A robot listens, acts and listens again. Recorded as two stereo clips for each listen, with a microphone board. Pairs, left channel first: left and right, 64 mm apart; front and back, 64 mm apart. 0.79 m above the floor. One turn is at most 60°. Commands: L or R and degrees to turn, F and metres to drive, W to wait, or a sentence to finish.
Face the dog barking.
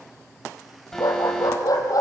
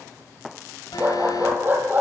L60
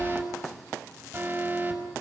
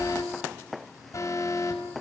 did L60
L55
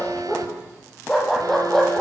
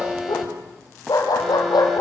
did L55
Facing the dog barking, over 4 m away.